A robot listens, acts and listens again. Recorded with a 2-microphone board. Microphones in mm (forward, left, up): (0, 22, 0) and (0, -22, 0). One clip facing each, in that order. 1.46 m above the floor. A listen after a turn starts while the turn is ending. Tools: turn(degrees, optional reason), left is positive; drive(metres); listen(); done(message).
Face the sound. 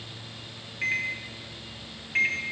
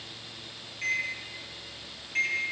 turn(degrees=30, reason="The microwave: about 30° left or 150° left.")
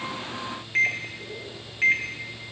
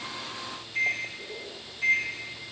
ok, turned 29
turn(degrees=120, reason="So it is at 120° left.")
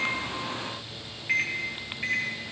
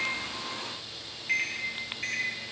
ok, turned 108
turn(degrees=15, reason="The microwave is now 15° left.")
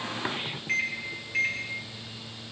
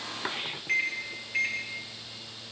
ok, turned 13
done("Found it: a microwave, straight ahead, 1 to 2 m away.")